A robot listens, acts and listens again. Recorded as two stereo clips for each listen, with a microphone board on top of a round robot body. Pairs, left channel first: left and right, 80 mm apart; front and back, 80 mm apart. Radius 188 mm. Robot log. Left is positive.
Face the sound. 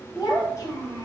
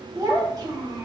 note: The child speaking: 140° left.
cmd yaw +140
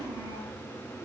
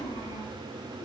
note: The child speaking is now 10° right.
cmd yaw -10
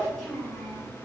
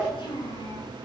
note: The child speaking is now 10° left.
cmd yaw +10
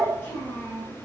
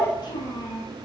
note: The child speaking is now 25° left.
cmd yaw +25
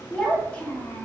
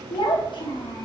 note: The child speaking is now 20° left.
cmd yaw +20
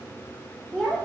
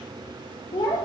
end: Found it: a child speaking, straight ahead.